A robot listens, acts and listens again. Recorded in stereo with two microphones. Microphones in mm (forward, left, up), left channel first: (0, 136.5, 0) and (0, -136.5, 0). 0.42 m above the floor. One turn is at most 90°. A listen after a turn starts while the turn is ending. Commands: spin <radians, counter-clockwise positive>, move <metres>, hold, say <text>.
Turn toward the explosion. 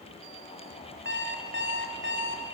hold
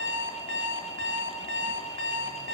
hold
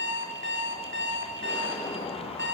spin 0.35
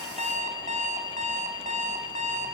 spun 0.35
hold
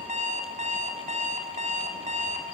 say I heard an explosion, but can't make it out now. It was about straight ahead or 140° left.